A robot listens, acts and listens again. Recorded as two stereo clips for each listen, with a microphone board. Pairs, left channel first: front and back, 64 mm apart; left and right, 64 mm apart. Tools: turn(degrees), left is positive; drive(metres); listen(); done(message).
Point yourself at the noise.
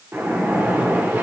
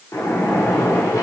turn(degrees=125)
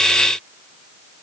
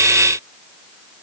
done("I heard a splash from this way, but can't make it out now.")